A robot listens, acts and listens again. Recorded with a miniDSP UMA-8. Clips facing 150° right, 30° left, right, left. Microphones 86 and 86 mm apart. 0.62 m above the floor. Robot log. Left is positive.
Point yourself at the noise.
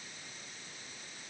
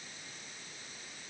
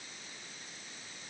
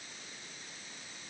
cmd idle
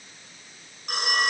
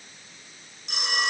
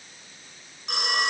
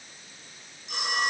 note: The phone ringing: 110° right.
cmd yaw -110
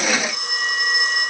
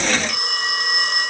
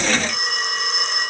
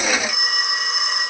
end: Facing the phone ringing.